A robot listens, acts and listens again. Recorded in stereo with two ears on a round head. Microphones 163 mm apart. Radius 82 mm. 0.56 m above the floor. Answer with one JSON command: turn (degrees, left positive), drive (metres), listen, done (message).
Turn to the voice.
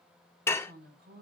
{"turn": -65}
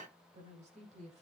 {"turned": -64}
{"turn": -40}
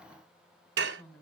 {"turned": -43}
{"done": "Found it: a woman speaking, straight ahead, over 4 m away."}